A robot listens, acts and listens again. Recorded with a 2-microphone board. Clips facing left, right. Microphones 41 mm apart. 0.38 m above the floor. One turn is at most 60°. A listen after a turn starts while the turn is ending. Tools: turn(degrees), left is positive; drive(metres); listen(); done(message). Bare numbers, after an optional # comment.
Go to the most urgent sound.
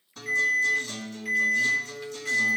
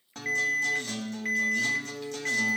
# The alarm: about 40° right or 140° right.
turn(-40)
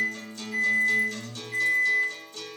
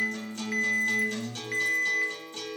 # So it is at 100° right.
turn(-60)
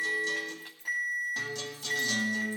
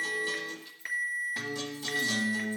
# The alarm is now 60° right.
turn(-60)
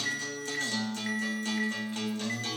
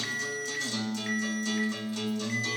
listen()
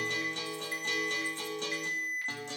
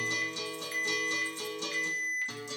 drive(1.0)
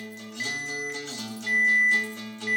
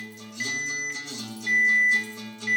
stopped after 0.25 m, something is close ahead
# The alarm is now 10° left.
turn(10)
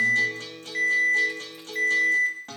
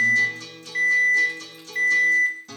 done("Blocked. The alarm is further on, straight ahead.")